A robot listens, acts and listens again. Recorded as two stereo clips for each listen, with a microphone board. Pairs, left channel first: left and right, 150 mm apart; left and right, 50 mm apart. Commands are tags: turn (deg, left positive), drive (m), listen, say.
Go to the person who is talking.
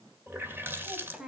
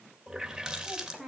<turn deg="-30"/>
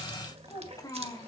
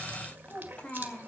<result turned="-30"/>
<turn deg="25"/>
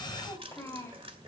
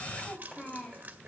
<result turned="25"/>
<turn deg="15"/>
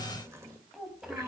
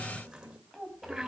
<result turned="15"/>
<drive m="1.0"/>
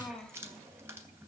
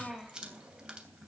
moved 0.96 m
<drive m="1.0"/>
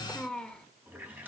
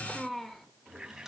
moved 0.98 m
<drive m="1.0"/>
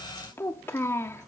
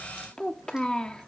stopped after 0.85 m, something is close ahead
<turn deg="15"/>
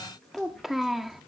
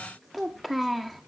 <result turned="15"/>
<say>I am next to the child speaking.</say>